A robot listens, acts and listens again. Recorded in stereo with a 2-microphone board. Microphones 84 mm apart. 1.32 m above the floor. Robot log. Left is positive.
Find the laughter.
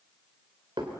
cmd idle
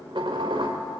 cmd idle
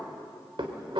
end: I can't make out laughter, only dishes clattering.